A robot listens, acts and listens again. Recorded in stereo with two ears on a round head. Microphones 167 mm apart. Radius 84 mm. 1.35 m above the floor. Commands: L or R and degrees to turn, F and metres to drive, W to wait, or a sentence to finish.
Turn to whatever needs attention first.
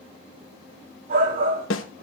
R50
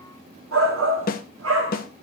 R80
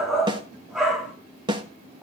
Found it: a shout, straight ahead.